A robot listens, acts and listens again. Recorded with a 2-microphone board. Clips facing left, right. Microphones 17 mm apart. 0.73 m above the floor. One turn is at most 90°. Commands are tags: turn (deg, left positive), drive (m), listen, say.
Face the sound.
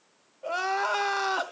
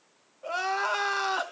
<turn deg="30"/>
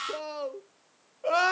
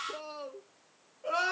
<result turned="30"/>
<turn deg="90"/>
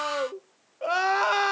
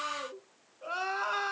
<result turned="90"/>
<turn deg="65"/>
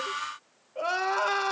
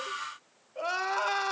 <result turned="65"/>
<say>Facing the crying.</say>